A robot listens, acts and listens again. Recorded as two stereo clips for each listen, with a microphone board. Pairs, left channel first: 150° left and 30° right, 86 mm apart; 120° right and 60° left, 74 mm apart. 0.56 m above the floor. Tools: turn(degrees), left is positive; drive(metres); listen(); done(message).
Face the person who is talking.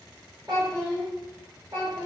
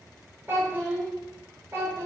done("Facing the child speaking.")